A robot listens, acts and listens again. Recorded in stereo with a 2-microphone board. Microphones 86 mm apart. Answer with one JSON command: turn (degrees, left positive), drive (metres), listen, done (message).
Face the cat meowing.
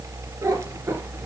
{"turn": -30}
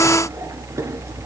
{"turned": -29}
{"listen": true}
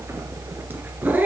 {"turn": -20}
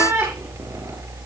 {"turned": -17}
{"turn": -30}
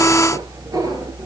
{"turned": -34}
{"turn": -135}
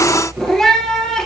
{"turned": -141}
{"turn": 10}
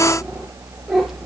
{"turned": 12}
{"done": "Facing the cat meowing."}